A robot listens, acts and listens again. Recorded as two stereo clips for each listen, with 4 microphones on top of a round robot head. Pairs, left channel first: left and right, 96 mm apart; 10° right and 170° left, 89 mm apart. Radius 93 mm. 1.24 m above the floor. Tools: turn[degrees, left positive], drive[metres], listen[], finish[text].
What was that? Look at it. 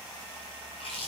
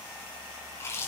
Thought: The chewing: 50° left.
Action: turn[50]
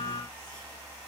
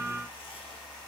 Action: listen[]
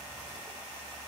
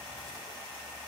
Action: listen[]
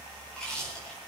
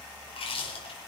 Action: finish[Facing the chewing.]